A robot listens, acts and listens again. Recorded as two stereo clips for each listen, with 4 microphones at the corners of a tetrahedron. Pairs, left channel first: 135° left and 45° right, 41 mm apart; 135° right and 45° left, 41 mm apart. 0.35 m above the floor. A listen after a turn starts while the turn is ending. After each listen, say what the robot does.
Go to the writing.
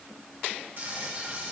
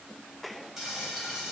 Keep listening.
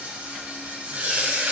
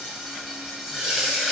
Keep listening.
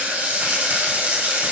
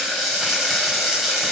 I can't make out writing to turn to.